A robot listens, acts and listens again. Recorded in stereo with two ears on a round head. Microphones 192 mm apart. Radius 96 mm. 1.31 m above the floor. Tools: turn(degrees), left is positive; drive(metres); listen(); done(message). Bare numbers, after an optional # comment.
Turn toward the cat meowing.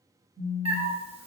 # The cat meowing: about 25° right or 155° right.
turn(-25)
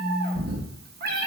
# So it is at 120° right.
turn(-120)
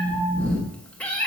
# The cat meowing is now 10° left.
turn(10)
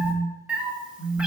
done("Facing the cat meowing.")